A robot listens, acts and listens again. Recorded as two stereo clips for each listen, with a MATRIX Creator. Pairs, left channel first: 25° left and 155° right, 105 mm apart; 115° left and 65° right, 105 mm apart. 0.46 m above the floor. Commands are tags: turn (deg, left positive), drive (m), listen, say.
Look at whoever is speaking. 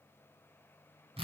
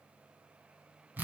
<listen/>
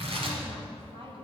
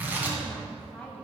<turn deg="-170"/>
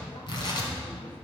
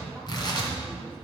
<listen/>
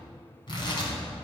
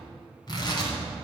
<listen/>
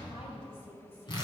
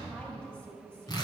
<turn deg="35"/>
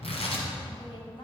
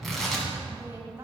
<say>Facing the woman speaking.</say>